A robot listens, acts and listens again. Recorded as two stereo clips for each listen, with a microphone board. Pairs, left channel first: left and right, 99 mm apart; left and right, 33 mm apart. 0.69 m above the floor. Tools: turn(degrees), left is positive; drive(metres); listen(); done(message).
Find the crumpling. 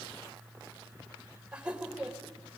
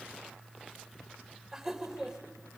listen()
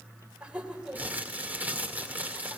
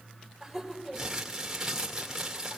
turn(degrees=-15)
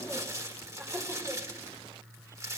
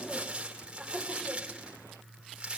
turn(degrees=-150)
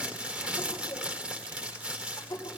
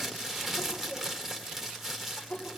turn(degrees=-10)
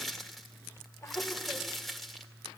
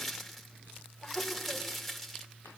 done("Facing the crumpling, 2 to 4 m away.")